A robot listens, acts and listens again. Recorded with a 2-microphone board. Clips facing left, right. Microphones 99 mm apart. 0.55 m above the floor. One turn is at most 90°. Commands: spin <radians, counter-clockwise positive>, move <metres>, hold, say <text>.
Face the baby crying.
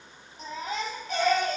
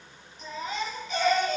spin 0.70
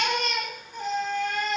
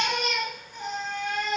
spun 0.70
say Facing the baby crying, over 4 m away.